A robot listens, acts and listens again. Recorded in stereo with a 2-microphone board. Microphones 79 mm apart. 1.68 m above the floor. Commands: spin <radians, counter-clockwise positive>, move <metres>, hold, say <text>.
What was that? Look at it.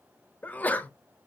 spin 0.35
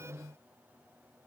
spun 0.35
hold
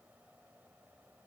say I heard a sneeze, but can't make it out now. It was about straight ahead or 140° left.